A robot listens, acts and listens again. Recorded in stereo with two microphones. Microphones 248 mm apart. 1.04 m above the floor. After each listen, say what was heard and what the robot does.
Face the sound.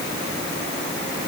Keep listening.
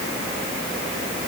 Keep listening.
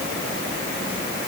I can't make out anything to turn to.